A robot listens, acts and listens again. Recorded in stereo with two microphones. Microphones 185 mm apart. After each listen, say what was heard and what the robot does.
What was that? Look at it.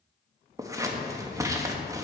The scissors: about 15° right or 165° right. Turn 15° right.
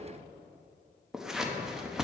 Found it: scissors, straight ahead, under 1 m away.